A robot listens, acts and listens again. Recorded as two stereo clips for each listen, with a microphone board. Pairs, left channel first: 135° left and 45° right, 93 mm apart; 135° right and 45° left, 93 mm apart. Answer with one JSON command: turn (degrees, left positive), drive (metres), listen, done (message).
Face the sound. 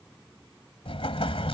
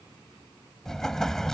{"turn": 140}
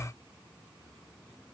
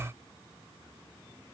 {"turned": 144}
{"done": "Facing where the explosion came from. I can't hear it now."}